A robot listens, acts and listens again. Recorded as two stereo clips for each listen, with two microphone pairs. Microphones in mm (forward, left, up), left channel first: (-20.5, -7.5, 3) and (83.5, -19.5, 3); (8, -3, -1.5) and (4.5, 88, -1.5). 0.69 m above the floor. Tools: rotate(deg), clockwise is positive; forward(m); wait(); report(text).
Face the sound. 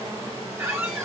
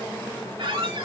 rotate(-70)
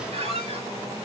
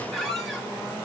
report("Found it: a squeak, straight ahead, 1 to 2 m away.")